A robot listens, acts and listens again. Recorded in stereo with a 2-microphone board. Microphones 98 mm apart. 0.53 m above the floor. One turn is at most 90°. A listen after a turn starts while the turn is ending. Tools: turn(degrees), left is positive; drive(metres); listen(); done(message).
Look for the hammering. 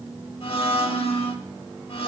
listen()
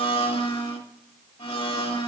listen()
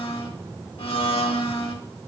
done("I can't make out hammering to turn to.")